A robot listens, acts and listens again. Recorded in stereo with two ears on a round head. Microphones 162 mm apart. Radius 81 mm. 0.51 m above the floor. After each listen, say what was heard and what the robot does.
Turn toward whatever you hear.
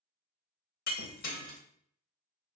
The breaking glass: about 50° left or 130° left. Turn 50° left.
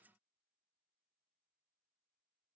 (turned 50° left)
Keep listening.
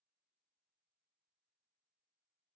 I heard breaking glass, but can't make it out now. It was about straight ahead or 80° left.